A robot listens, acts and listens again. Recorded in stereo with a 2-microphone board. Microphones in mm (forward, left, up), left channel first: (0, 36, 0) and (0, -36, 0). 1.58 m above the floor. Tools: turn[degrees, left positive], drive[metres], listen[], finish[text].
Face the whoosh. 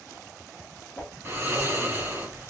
Thought: The whoosh: about 20° left or 160° left.
Action: turn[20]
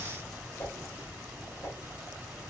Thought: So it is at 135° left.
Action: turn[135]
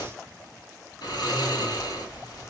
Action: listen[]
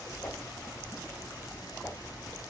Thought: The whoosh is now 30° left.
Action: turn[30]
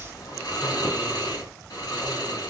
Action: listen[]
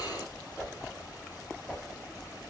Thought: The whoosh is now 10° left.
Action: turn[10]
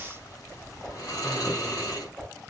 Action: finish[Found it: a whoosh, straight ahead, 1 to 2 m away.]